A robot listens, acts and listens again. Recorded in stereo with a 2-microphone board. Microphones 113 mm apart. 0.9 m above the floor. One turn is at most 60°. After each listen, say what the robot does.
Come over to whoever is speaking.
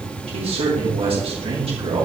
Turn 60° right.
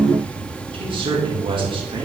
Turn 50° right.
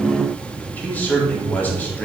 Turn 15° left.
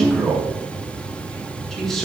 Drive 1.0 m forward.
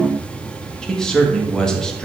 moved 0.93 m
Turn 10° left.
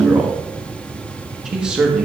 Drive 1.0 m forward.
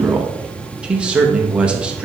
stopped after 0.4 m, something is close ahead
Turn 10° right.
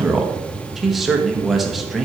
I am next to the man speaking.